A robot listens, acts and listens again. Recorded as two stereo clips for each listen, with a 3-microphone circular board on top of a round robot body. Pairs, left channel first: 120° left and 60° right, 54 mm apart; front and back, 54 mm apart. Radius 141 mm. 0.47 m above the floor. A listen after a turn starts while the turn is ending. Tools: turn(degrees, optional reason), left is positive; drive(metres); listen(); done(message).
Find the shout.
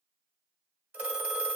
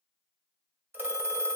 listen()
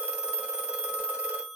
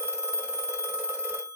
listen()
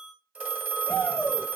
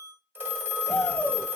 turn(degrees=80, reason="The shout: 80° left.")
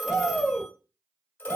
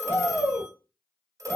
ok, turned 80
turn(degrees=15, reason="The shout is now 15° left.")
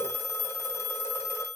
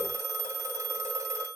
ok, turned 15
listen()
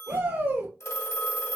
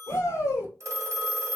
done("Facing the shout, 2 to 4 m away.")